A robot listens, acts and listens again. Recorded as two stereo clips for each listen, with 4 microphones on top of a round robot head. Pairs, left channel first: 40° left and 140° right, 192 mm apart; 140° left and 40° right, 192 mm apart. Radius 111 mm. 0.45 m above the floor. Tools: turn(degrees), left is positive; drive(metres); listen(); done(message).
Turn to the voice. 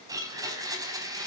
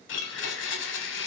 listen()
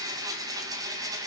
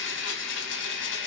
listen()
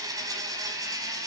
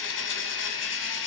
done("I can't make out anyone speaking, only a blender.")